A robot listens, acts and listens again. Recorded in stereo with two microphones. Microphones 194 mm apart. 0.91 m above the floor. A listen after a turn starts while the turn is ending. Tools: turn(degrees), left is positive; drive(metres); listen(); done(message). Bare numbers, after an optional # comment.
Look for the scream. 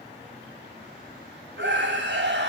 # The scream: about 70° right or 110° right.
turn(-70)
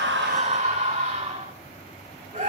# So it is at 40° right.
turn(-40)
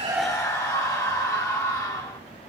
# The scream is now 15° left.
turn(15)
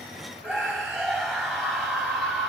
done("Facing the scream.")